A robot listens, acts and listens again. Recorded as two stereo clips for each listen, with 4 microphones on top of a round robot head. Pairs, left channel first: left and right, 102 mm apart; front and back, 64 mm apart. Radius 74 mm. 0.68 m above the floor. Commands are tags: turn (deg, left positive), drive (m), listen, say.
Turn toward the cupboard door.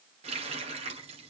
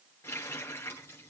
<listen/>
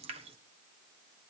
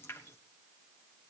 <listen/>
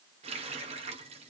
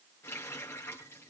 <say>I can't make out a cupboard door to turn to.</say>